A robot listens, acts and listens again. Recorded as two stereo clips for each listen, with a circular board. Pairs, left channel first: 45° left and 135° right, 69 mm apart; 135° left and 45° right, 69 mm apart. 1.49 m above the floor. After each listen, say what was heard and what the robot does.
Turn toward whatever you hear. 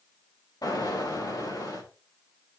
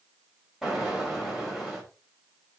The explosion: 40° left. Turn 40° left.
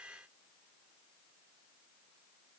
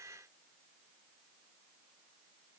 I heard an explosion from this way, but can't make it out now.